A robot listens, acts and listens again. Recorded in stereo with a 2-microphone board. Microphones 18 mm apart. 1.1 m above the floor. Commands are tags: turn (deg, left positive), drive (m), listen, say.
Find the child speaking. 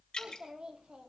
<turn deg="-55"/>
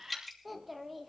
<say>Found it: a child speaking, straight ahead.</say>